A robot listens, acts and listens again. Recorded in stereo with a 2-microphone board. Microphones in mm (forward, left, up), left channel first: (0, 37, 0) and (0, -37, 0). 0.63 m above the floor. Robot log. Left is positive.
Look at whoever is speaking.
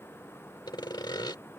cmd idle
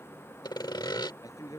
note: The man speaking: about 50° left or 130° left.
cmd yaw +50
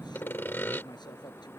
note: So it is at 75° left.
cmd yaw +75
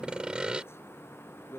note: The man speaking is now 35° left.
cmd yaw +35
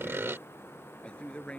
note: The man speaking is now 15° left.
cmd yaw +15
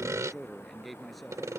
end: Facing the man speaking.